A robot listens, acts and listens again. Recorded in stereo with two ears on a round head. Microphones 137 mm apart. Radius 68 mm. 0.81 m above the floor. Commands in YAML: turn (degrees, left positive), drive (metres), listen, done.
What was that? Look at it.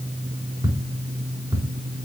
turn: -30
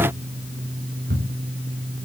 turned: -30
turn: -120
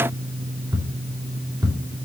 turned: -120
turn: -15
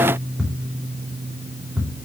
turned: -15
done: "Found it: ticking, straight ahead."